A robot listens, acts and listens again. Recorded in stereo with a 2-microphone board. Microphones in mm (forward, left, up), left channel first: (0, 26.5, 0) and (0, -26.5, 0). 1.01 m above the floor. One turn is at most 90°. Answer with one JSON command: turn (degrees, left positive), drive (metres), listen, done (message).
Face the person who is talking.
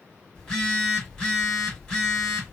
{"listen": true}
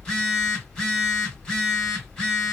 {"listen": true}
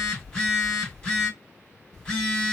{"done": "I can't make out anyone speaking to turn to."}